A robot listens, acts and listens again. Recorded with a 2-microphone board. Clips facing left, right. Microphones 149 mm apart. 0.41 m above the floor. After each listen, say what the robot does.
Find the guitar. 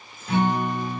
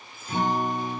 Turn 70° left.
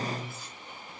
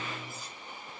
Turn 20° left.
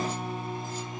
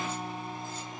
Found it: a guitar, straight ahead, 1 to 2 m away.